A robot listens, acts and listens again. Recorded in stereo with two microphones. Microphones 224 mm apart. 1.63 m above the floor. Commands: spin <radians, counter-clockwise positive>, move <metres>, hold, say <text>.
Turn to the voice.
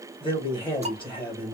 spin 0.35
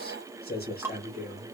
spin 2.36
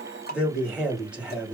say Facing the man speaking.